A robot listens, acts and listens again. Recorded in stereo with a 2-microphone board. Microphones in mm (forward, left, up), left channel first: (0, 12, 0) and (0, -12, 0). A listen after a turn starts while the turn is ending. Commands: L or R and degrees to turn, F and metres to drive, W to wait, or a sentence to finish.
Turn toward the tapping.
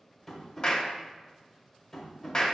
L30
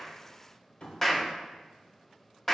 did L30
L140
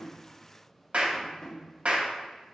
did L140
L45
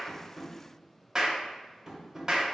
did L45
R15
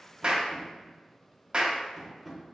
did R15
Found it: tapping, straight ahead.